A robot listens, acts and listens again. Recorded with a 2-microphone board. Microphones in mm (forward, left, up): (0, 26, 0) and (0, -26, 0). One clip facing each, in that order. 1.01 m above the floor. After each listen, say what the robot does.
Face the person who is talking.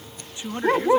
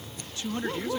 Turn 20° left.
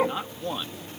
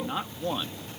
Found it: a man speaking, straight ahead.